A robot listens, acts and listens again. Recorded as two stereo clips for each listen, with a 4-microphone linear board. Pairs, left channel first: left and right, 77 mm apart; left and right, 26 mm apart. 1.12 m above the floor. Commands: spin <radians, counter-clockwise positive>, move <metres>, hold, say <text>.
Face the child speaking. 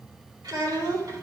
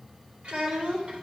spin -0.96
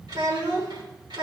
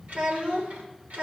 spin -1.40
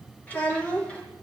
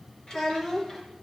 spin 0.26
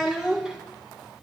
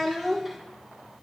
spin -0.17
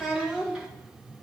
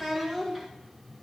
spin -0.17
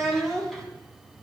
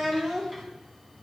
say Facing the child speaking.